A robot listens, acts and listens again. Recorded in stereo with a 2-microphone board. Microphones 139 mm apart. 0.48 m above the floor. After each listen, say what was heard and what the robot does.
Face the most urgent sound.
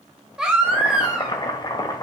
Turn 30° right.
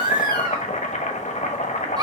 So it is at 145° right. Turn 145° right.
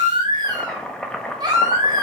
The baby crying is now 35° right. Turn 35° right.
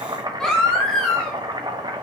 Found it: a baby crying, straight ahead, 1 to 2 m away.